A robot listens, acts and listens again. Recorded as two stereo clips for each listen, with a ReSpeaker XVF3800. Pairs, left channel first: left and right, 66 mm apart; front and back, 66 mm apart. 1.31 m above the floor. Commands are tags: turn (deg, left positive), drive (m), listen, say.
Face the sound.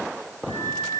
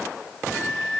<turn deg="-90"/>
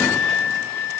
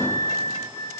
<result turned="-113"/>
<turn deg="20"/>
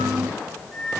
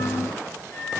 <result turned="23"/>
<say>Found it: a flute, straight ahead.</say>